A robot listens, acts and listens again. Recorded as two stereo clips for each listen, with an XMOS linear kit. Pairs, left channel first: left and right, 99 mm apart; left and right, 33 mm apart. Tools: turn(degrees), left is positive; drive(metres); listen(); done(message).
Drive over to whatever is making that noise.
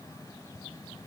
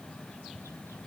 listen()
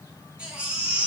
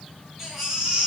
turn(degrees=-30)
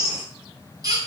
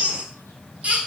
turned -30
turn(degrees=-140)
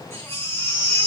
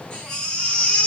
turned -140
turn(degrees=25)
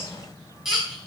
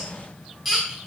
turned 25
drive(metres=1.0)
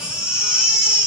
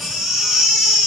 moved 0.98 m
turn(degrees=-10)
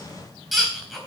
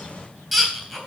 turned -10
drive(metres=1.0)
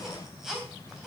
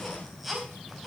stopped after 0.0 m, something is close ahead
done("Blocked. The baby crying is further on, straight ahead.")